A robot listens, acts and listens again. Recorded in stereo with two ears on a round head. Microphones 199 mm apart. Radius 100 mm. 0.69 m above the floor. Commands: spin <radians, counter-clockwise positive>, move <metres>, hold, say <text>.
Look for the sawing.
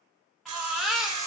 spin -1.22
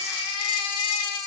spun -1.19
hold
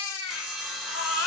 say Found it: sawing, straight ahead, under 1 m away.